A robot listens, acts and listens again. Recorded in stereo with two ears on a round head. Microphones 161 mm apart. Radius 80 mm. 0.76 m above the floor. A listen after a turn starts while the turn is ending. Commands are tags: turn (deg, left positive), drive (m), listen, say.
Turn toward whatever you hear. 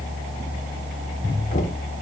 <turn deg="45"/>
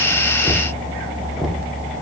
<say>Found it: knocking, straight ahead, 1 to 2 m away.</say>